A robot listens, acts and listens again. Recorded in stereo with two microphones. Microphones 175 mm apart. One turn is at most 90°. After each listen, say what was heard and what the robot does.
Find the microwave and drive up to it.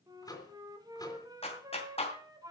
The microwave: about 20° left or 160° left. Turn 20° left.
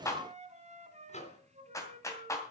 So it is at 140° left. Turn 90° left.
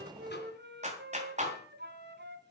Nothing new. It was at 50° left. Turn 50° left.
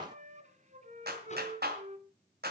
Keep listening.
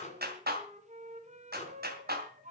The microwave is now 45° left. Turn 45° left.
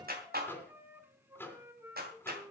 The microwave is now 15° left. Turn 15° left.
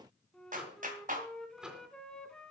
Drive 1.0 m forward.
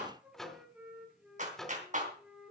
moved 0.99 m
Drive 1.0 m forward.
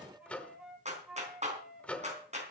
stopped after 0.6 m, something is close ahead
The microwave is now 10° left. Turn 10° left.
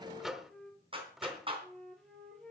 I am next to the microwave.